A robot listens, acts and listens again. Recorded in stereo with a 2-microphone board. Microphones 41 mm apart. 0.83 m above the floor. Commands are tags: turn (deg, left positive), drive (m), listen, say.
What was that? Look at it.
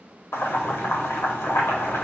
<turn deg="90"/>
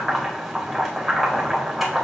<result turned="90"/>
<say>Facing the boiling, under 1 m away.</say>